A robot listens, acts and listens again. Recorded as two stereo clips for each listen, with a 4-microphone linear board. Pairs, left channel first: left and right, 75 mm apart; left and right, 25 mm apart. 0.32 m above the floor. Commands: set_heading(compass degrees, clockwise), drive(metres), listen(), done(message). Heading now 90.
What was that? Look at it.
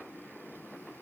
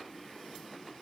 listen()
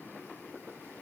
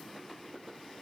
listen()
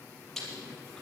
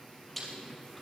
set_heading(60)
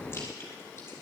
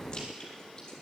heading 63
listen()
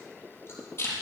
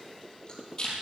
set_heading(273)
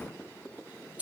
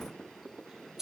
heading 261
set_heading(276)
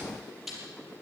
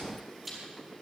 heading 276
done("Found it: chewing, straight ahead, over 4 m away.")